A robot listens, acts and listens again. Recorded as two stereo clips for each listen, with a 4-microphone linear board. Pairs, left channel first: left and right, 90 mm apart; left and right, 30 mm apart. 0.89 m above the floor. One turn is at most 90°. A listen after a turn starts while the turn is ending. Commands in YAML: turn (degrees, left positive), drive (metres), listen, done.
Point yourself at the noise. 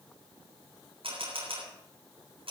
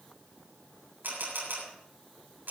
turn: -90
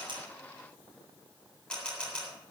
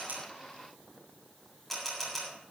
turn: 10
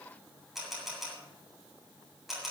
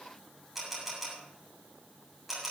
done: "Found it: a camera shutter, straight ahead, over 4 m away."